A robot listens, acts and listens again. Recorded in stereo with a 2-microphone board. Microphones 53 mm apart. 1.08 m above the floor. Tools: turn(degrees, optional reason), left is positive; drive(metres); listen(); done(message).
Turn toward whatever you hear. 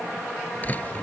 turn(degrees=30, reason="The door slam: about 30° left or 150° left.")
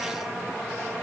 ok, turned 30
listen()
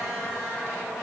done("I heard a door slam, but can't make it out now. It was about straight ahead or 120° left.")